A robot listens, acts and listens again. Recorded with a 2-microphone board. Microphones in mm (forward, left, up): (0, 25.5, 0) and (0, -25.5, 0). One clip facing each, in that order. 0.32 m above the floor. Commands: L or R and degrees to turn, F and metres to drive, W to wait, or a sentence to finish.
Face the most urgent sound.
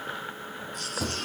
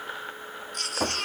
R65
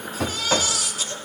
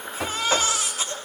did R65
R35
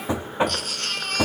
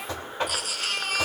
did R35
R10
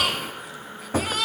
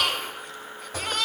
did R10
Found it: a baby crying, straight ahead, 2 to 4 m away.